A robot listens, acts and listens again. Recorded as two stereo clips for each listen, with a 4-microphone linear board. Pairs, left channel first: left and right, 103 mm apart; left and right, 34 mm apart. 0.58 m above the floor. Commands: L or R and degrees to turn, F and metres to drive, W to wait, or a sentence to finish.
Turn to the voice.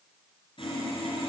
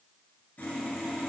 W
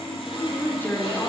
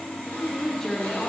L20
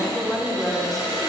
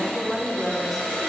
Found it: a woman speaking, straight ahead, 1 to 2 m away.